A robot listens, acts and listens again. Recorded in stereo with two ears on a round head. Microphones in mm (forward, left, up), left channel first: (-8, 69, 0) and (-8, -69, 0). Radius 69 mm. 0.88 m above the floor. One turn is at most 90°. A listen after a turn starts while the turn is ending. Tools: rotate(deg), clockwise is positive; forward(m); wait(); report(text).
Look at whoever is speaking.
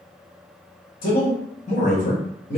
rotate(-45)
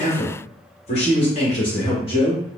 rotate(-35)
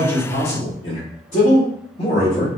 rotate(-50)
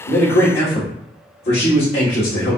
rotate(-55)
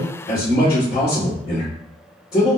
rotate(-25)
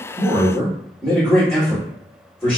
report("Found it: a man speaking, straight ahead, 1 to 2 m away.")